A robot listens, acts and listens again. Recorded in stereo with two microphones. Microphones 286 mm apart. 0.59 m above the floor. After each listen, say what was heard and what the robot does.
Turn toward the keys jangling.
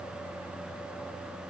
Keep listening.
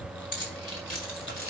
The keys jangling: about 60° left or 120° left. Turn 60° left.
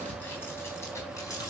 So it is at 15° left. Turn 15° left.
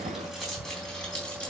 Facing the keys jangling.